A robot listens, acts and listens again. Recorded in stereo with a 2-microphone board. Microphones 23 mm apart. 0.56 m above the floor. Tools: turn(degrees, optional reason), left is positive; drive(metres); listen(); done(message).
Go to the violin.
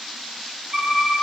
turn(degrees=-30, reason="The violin: about 30° right or 150° right.")
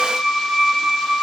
drive(metres=1.0)
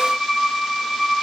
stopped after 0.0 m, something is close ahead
turn(degrees=-10, reason="The violin is now 10° right.")
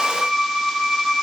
done("Blocked. The violin is further on, straight ahead.")